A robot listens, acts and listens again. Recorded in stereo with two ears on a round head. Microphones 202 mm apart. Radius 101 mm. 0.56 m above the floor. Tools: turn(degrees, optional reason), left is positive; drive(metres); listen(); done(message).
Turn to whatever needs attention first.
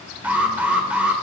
turn(degrees=-30)
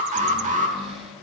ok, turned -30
turn(degrees=-140, reason="So it is at 140° right.")
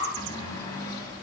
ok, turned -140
listen()
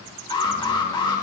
turn(degrees=20, reason="The alarm is now 20° left.")
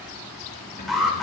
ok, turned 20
done("Facing the alarm.")